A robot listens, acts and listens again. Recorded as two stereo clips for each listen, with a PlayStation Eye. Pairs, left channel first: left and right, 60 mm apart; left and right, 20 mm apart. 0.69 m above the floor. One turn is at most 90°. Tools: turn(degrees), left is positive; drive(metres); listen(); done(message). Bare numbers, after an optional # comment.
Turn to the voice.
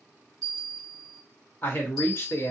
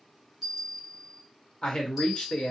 # The man speaking: about 45° left or 135° left.
turn(45)
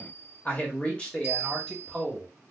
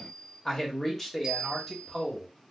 done("Found it: a man speaking, straight ahead.")